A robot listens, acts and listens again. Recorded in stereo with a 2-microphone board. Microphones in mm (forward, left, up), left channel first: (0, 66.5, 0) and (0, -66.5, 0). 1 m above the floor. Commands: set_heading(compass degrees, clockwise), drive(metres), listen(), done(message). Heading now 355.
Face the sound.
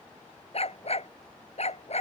set_heading(300)
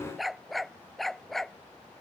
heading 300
done("Found it: a dog barking, straight ahead.")